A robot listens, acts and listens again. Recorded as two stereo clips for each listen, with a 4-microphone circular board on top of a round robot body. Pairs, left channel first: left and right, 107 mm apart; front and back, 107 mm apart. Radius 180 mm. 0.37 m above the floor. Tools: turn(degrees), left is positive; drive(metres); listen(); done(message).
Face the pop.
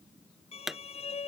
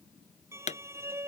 done("Found it: a pop, straight ahead.")